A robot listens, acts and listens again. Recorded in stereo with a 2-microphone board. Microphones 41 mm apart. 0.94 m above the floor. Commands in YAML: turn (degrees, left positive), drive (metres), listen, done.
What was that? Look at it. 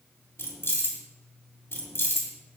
turn: 90
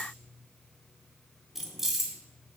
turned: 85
turn: -10
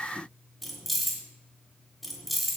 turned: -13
done: "Facing the keys jangling, 1 to 2 m away."